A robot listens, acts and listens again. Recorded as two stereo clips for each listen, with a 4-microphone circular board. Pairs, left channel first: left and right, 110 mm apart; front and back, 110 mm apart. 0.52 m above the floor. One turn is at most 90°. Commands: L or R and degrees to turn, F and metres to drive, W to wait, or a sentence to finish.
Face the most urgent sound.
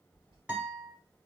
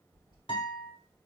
W
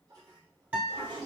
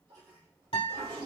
W
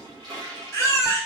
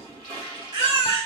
L90
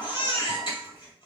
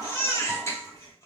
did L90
L60
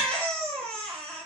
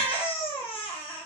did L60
L10
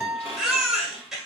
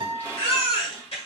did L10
Facing the baby crying, 1 to 2 m away.